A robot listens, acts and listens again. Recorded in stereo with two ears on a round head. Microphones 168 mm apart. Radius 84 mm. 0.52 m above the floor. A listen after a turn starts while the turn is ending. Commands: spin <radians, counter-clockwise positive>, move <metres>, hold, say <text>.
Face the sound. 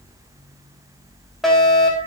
spin 0.52
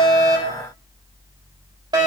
spin -0.44
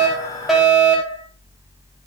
say Facing the fire alarm.